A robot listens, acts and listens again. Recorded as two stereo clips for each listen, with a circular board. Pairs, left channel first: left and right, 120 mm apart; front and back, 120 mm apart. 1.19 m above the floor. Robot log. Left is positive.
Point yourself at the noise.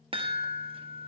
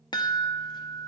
note: The chime: 50° right.
cmd yaw -50
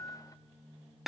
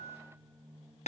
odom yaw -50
end: Facing the chime.